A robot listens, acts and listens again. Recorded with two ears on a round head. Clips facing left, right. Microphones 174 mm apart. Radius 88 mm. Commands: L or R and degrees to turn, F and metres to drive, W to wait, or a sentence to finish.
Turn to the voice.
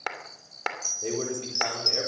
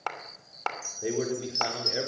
R30
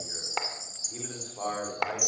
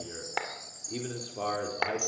R140
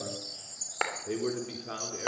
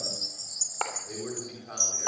L50
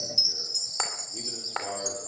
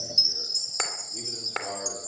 W
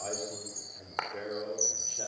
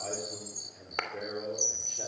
Facing the man speaking.